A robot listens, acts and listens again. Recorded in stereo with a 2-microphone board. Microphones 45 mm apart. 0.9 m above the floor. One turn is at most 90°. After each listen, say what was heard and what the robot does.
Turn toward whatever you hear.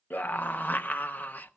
The scream: about 40° left or 140° left. Turn 40° left.
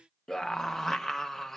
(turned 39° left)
So it is at 10° left. Turn 10° left.
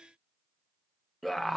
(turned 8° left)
Facing the scream, under 1 m away.